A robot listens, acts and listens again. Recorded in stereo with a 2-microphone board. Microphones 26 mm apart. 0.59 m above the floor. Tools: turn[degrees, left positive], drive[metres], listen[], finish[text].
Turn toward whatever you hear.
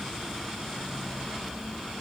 Action: listen[]
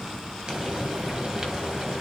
Thought: The frying: about 30° right or 150° right.
Action: turn[-30]
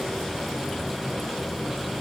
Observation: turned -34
Action: finish[Facing the frying, 1 to 2 m away.]